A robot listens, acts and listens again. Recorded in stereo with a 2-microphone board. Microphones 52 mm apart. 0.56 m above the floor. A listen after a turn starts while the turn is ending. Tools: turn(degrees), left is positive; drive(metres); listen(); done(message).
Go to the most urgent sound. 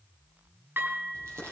listen()
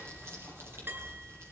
listen()
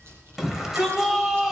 turn(degrees=-30)
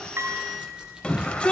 turn(degrees=25)
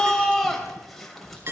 drive(metres=1.0)
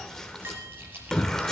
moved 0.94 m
turn(degrees=10)
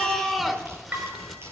drive(metres=1.0)
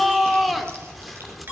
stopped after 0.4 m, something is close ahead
done("I am next to the shout.")